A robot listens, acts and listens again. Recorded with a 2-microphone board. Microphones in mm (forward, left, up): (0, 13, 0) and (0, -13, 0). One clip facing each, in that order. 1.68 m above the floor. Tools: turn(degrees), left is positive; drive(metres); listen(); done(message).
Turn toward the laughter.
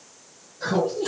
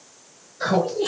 turn(degrees=-50)
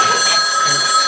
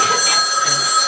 listen()
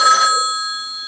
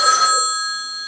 listen()
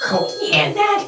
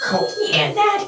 turn(degrees=40)
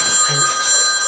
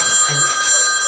listen()
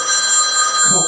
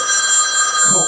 listen()
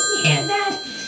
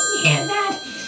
turn(degrees=15)
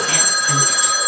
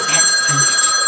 listen()
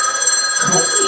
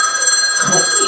listen()
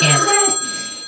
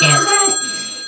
done("Facing the laughter, 2 to 4 m away.")